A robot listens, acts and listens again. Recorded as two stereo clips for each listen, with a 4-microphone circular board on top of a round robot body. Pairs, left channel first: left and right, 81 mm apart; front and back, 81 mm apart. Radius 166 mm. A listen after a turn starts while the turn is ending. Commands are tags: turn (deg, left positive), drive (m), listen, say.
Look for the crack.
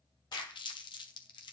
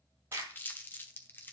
<turn deg="135"/>
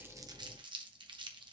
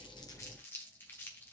<say>Facing where the crack came from. I can't hear it now.</say>